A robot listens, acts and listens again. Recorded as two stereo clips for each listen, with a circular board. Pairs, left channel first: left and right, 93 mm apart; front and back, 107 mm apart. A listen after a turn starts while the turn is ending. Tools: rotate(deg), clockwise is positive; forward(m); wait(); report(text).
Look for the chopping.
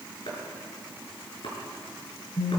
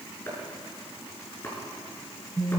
rotate(-70)
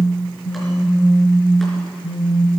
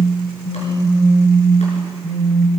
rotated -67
wait()
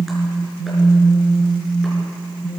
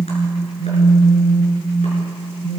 wait()
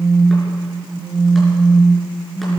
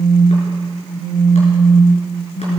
report("Facing where the chopping came from. I can't hear it now.")